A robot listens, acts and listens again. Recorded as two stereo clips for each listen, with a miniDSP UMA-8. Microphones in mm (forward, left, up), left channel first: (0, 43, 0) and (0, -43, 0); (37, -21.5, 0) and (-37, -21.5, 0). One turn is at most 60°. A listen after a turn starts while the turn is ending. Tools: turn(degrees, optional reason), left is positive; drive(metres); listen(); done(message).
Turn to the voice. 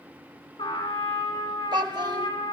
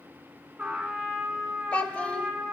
turn(degrees=-60, reason="The child speaking: 70° right.")
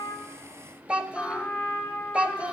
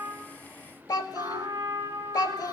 turn(degrees=-20, reason="The child speaking is now 20° right.")
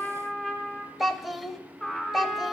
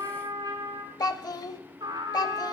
done("Facing the child speaking, under 1 m away.")